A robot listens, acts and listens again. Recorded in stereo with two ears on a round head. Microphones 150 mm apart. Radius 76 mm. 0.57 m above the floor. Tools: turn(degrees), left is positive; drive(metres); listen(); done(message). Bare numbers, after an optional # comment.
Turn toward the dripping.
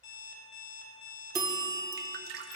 # The dripping: about 60° right or 120° right.
turn(-60)
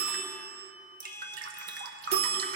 # So it is at 50° right.
turn(-50)
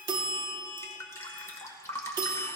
# The dripping is now 15° left.
turn(15)
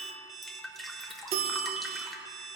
done("Found it: dripping, straight ahead, 1 to 2 m away.")